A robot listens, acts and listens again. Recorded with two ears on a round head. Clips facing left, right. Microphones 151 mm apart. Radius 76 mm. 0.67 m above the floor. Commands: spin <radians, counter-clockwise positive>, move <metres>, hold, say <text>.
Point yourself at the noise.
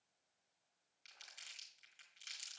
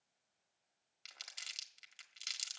spin -1.57
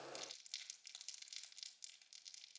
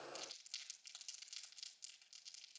spin 0.17
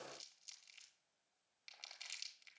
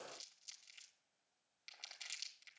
say Facing the crumpling, 1 to 2 m away.